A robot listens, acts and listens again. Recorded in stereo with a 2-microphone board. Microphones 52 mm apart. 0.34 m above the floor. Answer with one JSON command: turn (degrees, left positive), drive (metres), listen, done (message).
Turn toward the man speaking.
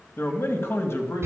{"turn": 55}
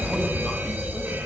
{"listen": true}
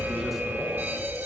{"listen": true}
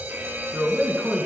{"done": "Facing the man speaking."}